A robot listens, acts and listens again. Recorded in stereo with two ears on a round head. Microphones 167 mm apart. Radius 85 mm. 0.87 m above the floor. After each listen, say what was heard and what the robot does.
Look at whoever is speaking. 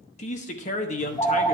The man speaking: about 40° left or 140° left. Turn 40° left.
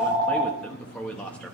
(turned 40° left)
So it is at 10° left. Turn 10° left.
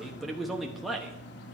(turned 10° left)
Facing the man speaking.